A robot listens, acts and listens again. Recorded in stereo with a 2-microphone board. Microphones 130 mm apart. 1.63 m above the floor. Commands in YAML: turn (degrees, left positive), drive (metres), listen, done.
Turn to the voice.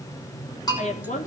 turn: 75
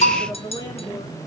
turn: 30
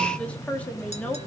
turn: 10
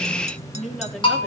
done: "Found it: a woman speaking, straight ahead, 2 to 4 m away."